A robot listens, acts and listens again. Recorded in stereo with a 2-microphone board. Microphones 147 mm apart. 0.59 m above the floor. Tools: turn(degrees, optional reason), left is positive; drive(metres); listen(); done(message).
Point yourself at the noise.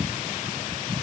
listen()
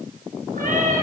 turn(degrees=-65, reason="The cat meowing: about 65° right or 115° right.")
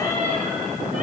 turn(degrees=-60, reason="So it is at 60° right.")
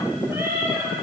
turn(degrees=-20, reason="The cat meowing is now 20° right.")
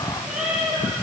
done("Facing the cat meowing, 2 to 4 m away.")